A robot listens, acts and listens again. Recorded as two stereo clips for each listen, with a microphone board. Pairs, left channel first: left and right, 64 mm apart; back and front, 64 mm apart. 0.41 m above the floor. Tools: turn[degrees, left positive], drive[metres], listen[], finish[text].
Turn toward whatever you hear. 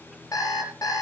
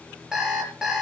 Thought: The alarm clock: 80° left.
Action: turn[80]
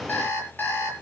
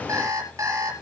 Thought: The alarm clock is now 30° left.
Action: turn[30]
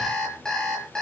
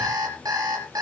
Thought: The alarm clock is now 10° left.
Action: turn[10]
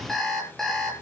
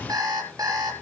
Action: finish[Found it: an alarm clock, straight ahead, over 4 m away.]